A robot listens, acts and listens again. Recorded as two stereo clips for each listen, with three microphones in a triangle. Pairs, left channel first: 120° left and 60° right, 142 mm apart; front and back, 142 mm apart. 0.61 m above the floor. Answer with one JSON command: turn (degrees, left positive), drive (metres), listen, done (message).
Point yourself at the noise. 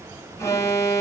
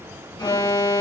{"turn": 55}
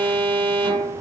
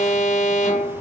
{"turn": -10}
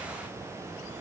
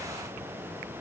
{"listen": true}
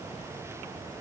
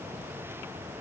{"listen": true}
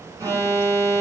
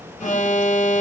{"done": "Facing the alarm."}